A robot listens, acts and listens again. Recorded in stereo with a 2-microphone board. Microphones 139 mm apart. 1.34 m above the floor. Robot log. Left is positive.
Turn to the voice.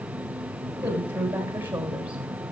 cmd yaw -30
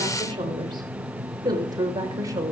note: The woman speaking: about 25° right or 155° right.
cmd yaw -25
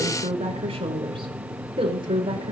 note: So it is at 140° right.
cmd yaw -140
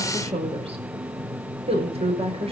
note: The woman speaking is now 45° right.
cmd yaw -45
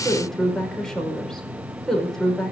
end: Found it: a woman speaking, straight ahead.